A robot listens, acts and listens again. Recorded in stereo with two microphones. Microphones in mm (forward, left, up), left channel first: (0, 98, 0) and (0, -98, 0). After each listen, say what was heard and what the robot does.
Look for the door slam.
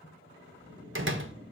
The door slam: about 70° right or 110° right. Turn 70° right.
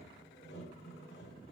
Keep listening.
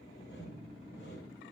I heard a door slam, but can't make it out now. It was about straight ahead or 40° right.